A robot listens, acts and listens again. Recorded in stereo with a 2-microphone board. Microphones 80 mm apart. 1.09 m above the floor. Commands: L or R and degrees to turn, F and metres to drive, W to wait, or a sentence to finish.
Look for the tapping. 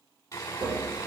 R60
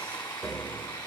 Facing the tapping, 1 to 2 m away.